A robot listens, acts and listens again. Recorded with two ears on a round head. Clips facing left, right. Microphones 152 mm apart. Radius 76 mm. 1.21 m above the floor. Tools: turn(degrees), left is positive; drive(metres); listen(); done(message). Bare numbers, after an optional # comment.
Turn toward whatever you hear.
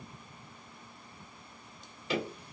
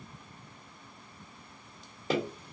# The tapping: about 35° right or 145° right.
turn(-35)
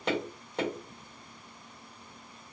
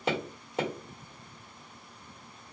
done("Found it: tapping, straight ahead.")